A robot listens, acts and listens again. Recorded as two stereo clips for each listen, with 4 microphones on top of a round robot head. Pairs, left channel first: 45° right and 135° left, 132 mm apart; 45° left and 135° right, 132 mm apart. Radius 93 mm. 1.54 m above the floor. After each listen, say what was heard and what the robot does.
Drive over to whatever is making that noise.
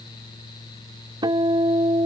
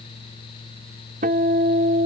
The guitar: 165° right. Turn 165° right.
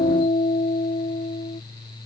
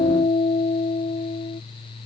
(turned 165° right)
Drive 1.0 m forward.
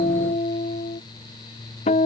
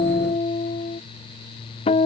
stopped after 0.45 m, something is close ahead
Blocked. The guitar is further on, straight ahead.